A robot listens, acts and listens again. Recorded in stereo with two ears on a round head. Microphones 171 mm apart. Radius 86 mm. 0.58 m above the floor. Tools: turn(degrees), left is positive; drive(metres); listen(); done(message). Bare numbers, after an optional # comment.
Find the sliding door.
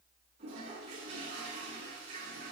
listen()
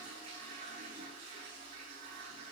listen()
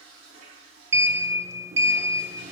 # The sliding door: about 15° right or 165° right.
turn(-15)
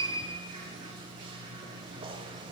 # So it is at 150° right.
turn(-150)
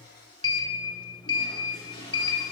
# The sliding door is now 25° left.
turn(25)
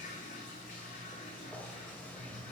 # The sliding door is now 10° left.
turn(10)
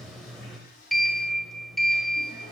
done("Facing the sliding door, 1 to 2 m away.")